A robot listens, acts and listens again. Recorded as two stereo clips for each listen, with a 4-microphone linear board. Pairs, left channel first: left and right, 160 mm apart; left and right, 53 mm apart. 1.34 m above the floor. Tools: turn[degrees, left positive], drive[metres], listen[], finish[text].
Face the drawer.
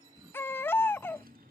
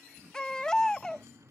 Action: turn[-90]
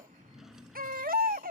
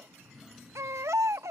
Action: finish[Found it: a drawer, straight ahead.]